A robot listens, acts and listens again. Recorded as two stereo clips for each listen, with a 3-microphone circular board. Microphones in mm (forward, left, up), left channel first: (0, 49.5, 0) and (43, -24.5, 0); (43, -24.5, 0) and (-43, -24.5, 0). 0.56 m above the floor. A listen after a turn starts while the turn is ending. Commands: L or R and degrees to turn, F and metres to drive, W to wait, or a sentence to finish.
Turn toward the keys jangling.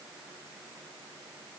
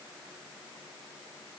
W
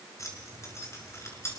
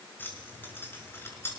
L60
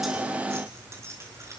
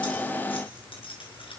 Found it: keys jangling, straight ahead, over 4 m away.